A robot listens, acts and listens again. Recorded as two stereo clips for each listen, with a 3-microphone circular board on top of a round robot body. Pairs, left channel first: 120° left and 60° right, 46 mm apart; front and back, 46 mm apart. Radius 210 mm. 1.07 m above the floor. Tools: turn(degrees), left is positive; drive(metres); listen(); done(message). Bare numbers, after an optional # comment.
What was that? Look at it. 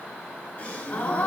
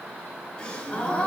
# The gasp: 65° left.
turn(65)
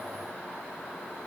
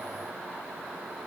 done("Facing where the gasp came from. I can't hear it now.")